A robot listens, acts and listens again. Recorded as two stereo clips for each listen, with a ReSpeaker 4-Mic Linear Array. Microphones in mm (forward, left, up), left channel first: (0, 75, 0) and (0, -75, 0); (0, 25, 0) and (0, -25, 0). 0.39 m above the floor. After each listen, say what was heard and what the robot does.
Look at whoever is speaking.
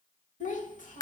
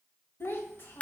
The child speaking: about 55° left or 125° left. Turn 55° left.
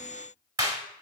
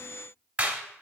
Keep listening.
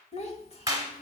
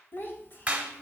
So it is at 55° left. Turn 55° left.
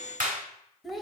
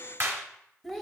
Facing the child speaking.